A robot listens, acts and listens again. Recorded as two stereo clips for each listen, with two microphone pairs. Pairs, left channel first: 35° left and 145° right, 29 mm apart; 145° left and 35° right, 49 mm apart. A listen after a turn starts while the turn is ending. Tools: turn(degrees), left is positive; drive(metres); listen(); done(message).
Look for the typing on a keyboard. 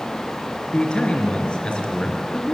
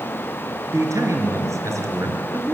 listen()
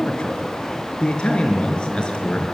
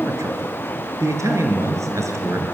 listen()
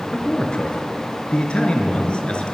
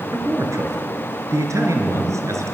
done("I can't make out typing on a keyboard, only a man speaking.")